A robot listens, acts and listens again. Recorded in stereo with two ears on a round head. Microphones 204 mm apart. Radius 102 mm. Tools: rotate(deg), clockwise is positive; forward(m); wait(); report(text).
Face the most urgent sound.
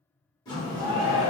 rotate(15)
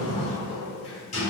wait()
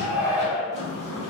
report("Facing the shout.")